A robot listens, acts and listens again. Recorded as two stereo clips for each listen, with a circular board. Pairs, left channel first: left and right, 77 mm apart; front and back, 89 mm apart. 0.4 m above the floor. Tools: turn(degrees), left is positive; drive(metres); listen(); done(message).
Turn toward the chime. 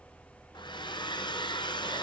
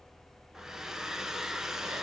listen()
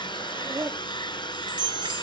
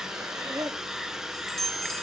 turn(degrees=-90)
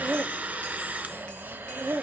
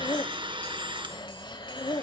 listen()
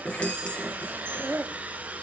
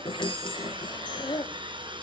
turn(degrees=15)
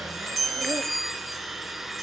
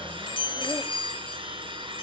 done("Found it: a chime, straight ahead.")